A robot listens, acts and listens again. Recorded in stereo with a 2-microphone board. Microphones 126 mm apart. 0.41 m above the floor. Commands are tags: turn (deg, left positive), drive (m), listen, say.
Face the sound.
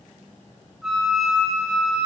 <turn deg="30"/>
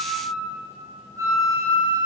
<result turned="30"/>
<turn deg="-30"/>
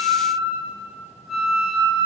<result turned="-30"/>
<say>Found it: a flute, straight ahead.</say>